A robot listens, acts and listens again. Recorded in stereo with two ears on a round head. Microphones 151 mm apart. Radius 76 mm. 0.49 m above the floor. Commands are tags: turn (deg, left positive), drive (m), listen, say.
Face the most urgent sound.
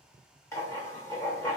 <listen/>
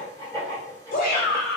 <turn deg="60"/>
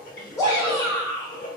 <turn deg="30"/>
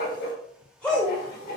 <turn deg="10"/>
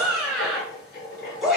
<say>Facing the shout, 1 to 2 m away.</say>